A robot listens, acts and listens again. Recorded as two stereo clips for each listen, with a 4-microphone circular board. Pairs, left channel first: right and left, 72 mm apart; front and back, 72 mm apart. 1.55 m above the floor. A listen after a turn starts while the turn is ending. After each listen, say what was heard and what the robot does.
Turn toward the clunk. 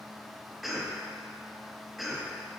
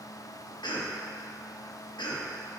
Keep listening.
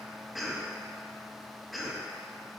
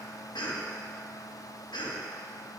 Keep listening.
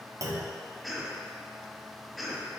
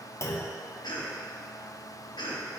The clunk: 50° left. Turn 50° left.
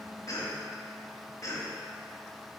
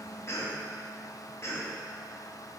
I heard a clunk from this way, but can't make it out now.